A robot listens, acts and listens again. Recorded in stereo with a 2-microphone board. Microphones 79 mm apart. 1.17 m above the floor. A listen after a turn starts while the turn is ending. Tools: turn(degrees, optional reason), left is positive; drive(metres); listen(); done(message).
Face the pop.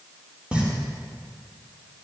turn(degrees=-15, reason="The pop: about 15° right or 165° right.")
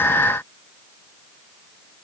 listen()
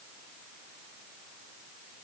done("I heard a pop, but can't make it out now. It was about straight ahead or 150° right.")